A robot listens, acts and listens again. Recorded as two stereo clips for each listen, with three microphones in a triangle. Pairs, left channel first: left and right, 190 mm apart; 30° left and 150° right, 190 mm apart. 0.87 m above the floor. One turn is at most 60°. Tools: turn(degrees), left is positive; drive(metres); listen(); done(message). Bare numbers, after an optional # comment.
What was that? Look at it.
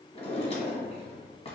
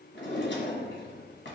# The drawer: 35° left.
turn(35)
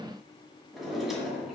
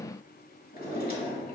done("Facing the drawer, 1 to 2 m away.")